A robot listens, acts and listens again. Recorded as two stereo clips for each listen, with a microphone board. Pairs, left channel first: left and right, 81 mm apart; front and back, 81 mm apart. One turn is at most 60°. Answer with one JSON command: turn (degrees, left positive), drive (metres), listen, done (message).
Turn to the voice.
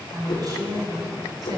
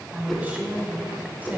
{"turn": -60}
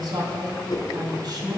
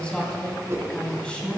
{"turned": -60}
{"turn": -60}
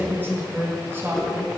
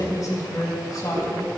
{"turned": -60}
{"turn": -30}
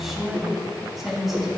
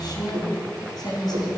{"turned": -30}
{"done": "Facing the woman speaking."}